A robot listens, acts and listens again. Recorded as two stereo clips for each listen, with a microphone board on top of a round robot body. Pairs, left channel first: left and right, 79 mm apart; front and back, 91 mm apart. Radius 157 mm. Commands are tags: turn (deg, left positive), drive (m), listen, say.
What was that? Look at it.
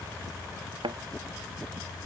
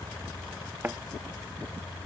<turn deg="-110"/>
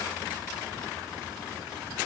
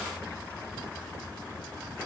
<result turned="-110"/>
<say>I heard a thud from this way, but can't make it out now.</say>